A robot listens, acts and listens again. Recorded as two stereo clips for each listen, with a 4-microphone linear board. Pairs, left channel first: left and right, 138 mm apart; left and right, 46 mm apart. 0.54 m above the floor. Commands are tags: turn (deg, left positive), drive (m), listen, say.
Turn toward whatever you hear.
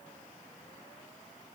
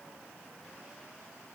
<listen/>
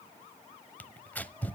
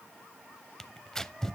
<turn deg="30"/>
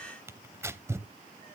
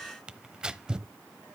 <turn deg="-20"/>
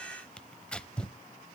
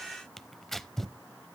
<say>Found it: tearing paper, straight ahead.</say>